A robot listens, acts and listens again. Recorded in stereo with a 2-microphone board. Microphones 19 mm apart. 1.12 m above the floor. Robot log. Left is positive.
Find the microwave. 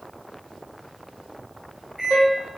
note: The microwave: about 25° right or 155° right.
cmd yaw -25
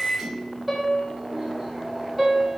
note: So it is at 130° right.
cmd yaw -130
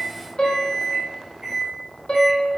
note: The microwave is now 35° right.
cmd yaw -35
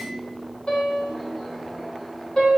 note: The microwave is now 10° left.
cmd yaw +10
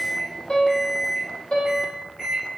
end: Found it: a microwave, straight ahead.